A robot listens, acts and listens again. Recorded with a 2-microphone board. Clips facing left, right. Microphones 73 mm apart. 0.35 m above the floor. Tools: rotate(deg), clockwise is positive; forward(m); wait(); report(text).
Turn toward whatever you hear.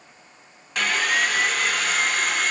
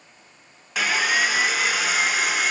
rotate(30)
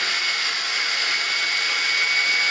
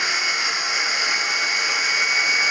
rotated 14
rotate(160)
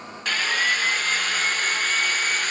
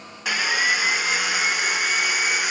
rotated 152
rotate(10)
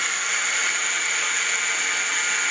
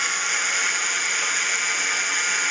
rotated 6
report("Found it: sawing, straight ahead, 1 to 2 m away.")